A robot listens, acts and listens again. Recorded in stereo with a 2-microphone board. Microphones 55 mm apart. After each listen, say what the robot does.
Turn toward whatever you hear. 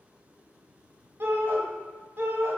Turn 40° right.
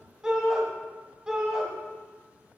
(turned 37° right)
Turn 15° right.
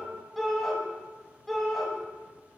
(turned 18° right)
Facing the shout, 1 to 2 m away.